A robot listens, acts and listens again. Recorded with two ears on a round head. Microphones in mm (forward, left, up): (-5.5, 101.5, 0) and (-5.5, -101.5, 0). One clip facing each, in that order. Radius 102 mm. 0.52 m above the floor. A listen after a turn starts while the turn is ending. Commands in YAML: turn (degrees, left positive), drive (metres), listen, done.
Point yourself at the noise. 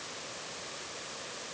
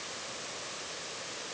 listen: true
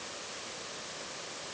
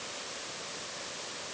listen: true
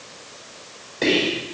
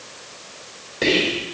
turn: -30
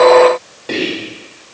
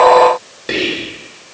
turn: -145
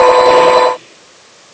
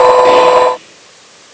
listen: true
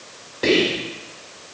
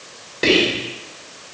turn: -40
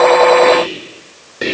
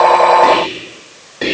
turn: 20
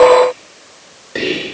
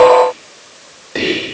done: "Found it: whispering, straight ahead."